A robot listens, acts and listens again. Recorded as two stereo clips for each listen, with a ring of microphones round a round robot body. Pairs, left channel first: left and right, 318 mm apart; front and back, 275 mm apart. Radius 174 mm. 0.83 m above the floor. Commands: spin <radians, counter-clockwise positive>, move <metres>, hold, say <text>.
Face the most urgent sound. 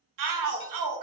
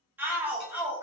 spin -1.66
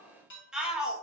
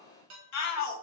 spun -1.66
say Found it: a shout, straight ahead, under 1 m away.